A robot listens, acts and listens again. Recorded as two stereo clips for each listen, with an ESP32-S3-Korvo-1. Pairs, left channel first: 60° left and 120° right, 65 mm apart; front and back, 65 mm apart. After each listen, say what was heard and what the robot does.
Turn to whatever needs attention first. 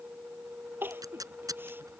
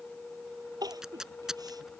The crying: straight behind. Turn 180° left.
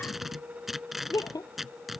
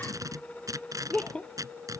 The crying is now 75° left. Turn 75° left.
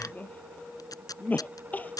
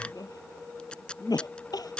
Facing the crying.